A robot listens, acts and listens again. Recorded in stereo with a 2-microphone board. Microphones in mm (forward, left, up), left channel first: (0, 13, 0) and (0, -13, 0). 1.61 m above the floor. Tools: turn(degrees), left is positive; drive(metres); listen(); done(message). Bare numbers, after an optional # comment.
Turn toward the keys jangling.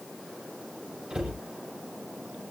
listen()
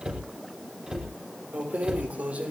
# The keys jangling: about 65° right or 115° right.
turn(-65)
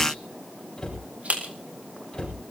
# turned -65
# So it is at 65° right.
turn(-65)
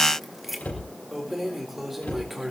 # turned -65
# The keys jangling is now 10° right.
turn(-10)
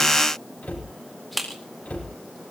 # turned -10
done("Found it: keys jangling, straight ahead.")